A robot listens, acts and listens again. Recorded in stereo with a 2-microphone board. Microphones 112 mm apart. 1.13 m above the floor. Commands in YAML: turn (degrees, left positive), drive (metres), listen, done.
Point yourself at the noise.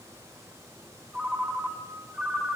turn: -30
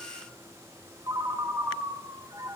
turn: -140
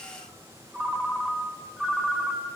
turn: -10
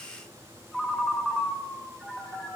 done: "Found it: a ringtone, straight ahead."